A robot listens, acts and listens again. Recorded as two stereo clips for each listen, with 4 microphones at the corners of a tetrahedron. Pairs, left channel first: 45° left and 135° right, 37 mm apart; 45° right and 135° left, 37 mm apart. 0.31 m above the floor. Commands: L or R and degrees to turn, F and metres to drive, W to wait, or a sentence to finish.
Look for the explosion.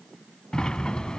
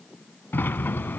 W
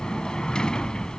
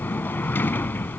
W
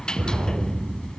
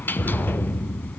R95
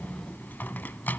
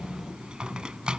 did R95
Facing where the explosion came from. I can't hear it now.